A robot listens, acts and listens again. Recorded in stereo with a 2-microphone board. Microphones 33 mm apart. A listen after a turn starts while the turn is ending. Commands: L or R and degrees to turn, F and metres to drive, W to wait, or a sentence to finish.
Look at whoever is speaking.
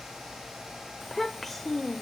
L30
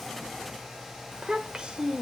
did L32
R30
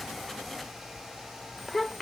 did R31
Found it: a child speaking, straight ahead.